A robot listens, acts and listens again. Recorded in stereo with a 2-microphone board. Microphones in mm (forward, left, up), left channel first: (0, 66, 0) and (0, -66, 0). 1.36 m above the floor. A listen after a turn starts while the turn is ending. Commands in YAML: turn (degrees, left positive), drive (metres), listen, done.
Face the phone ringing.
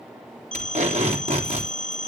turn: 90
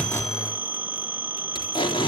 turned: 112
turn: -15
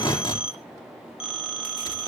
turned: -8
turn: -10
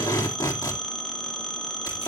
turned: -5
done: "Facing the phone ringing, 2 to 4 m away."